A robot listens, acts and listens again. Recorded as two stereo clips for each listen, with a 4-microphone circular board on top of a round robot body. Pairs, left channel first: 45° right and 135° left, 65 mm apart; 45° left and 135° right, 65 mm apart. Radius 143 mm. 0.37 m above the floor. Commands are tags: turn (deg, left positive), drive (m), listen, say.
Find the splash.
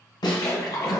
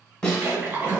<turn deg="-75"/>
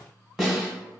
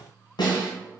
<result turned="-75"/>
<say>Facing where the splash came from. I can't hear it now.</say>